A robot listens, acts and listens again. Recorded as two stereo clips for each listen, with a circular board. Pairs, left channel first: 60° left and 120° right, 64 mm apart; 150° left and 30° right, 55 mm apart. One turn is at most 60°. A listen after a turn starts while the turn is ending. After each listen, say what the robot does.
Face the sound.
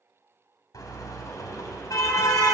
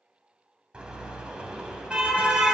Turn 40° left.
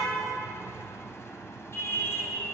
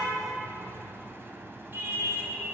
Turn 15° left.
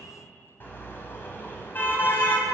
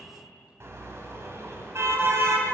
Found it: a car horn, straight ahead.